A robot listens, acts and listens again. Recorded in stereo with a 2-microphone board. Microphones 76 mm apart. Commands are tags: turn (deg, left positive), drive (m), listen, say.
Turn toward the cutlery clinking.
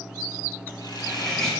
<turn deg="30"/>
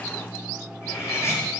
<turn deg="140"/>
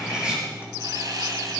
<turn deg="-15"/>
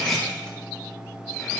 <say>Facing the cutlery clinking, over 4 m away.</say>